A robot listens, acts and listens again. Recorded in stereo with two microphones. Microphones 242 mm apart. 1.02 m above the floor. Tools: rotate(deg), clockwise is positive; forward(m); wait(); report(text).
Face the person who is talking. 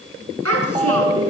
rotate(90)
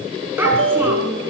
rotate(10)
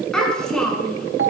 report("Facing the child speaking, over 4 m away.")